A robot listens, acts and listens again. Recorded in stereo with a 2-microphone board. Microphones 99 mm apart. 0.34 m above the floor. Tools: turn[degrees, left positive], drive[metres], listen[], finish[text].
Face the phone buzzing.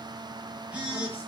Action: turn[-30]
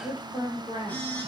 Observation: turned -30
Thought: So it is at 15° left.
Action: turn[15]
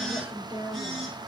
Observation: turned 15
Action: finish[Found it: a phone buzzing, straight ahead, over 4 m away.]